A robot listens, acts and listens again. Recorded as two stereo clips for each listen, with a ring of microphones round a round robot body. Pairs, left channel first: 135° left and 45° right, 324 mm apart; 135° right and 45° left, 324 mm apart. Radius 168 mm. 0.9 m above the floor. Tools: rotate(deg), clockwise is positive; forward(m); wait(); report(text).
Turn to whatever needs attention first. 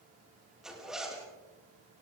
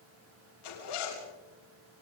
wait()
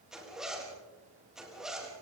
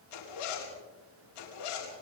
wait()
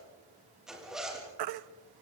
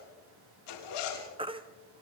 rotate(30)
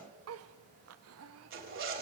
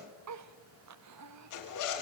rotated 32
wait()
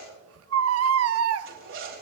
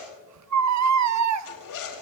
report("Found it: a baby crying, straight ahead, under 1 m away.")